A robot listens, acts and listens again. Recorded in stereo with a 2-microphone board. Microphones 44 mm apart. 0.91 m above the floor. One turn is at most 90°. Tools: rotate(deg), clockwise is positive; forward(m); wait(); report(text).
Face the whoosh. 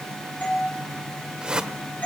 rotate(20)
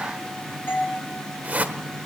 rotate(90)
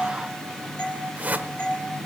rotate(45)
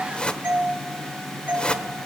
rotate(-30)
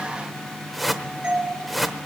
report("Found it: a whoosh, straight ahead.")